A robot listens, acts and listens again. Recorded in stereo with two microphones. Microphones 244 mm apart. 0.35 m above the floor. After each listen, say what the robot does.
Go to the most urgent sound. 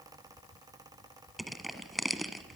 Keep listening.
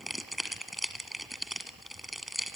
Keep listening.
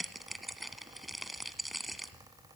I can't make out anything urgent, only crushing.